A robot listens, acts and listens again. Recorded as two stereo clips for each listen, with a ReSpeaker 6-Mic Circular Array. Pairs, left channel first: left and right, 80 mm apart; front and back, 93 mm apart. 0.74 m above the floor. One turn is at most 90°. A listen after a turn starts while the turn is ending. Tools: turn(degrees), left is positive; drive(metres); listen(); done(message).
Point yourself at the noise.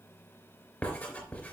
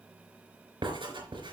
turn(degrees=90)
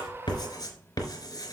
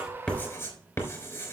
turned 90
turn(degrees=55)
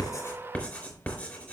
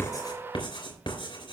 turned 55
turn(degrees=15)
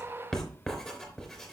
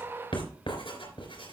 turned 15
done("Facing the writing.")